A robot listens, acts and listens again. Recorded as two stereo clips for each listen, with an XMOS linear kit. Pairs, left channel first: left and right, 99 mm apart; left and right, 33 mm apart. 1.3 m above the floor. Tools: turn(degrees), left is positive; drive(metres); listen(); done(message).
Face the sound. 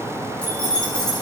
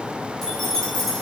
turn(degrees=30)
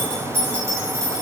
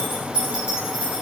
turn(degrees=-35)
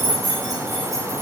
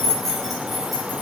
done("Facing the keys jangling.")